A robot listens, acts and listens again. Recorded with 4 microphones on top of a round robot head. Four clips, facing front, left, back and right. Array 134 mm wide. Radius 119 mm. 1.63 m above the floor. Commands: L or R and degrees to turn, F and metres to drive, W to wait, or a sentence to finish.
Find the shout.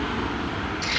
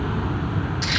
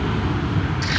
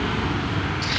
W
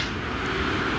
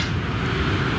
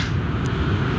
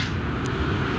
W
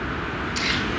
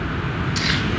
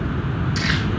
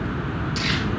I can't make out a shout, only crumpling.